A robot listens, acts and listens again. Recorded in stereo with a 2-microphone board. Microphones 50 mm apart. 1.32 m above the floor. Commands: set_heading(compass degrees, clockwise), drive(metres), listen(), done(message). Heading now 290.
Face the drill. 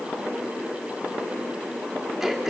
listen()
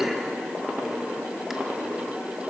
listen()
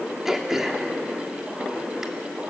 done("I can't make out a drill, only throat clearing.")